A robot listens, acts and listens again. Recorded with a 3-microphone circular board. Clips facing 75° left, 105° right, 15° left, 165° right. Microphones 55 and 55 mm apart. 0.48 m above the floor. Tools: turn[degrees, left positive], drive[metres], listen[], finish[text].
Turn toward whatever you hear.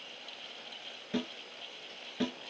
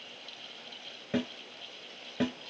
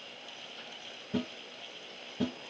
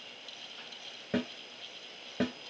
Thought: The snare drum: 175° right.
Action: turn[-175]
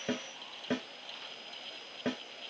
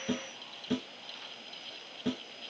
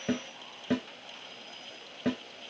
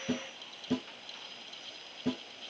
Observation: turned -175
Thought: The snare drum is now 25° left.
Action: turn[25]
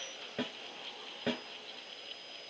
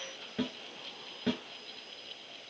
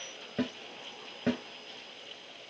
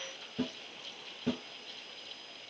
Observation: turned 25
Action: finish[Facing the snare drum.]